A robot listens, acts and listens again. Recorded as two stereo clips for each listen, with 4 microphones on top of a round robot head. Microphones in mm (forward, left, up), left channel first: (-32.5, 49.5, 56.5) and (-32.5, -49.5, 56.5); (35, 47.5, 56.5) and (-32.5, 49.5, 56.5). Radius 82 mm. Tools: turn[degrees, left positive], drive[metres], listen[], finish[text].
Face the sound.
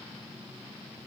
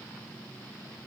Action: listen[]
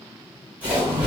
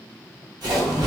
Thought: The splash: 165° right.
Action: turn[-165]
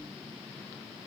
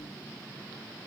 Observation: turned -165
Action: finish[I heard a splash from this way, but can't make it out now.]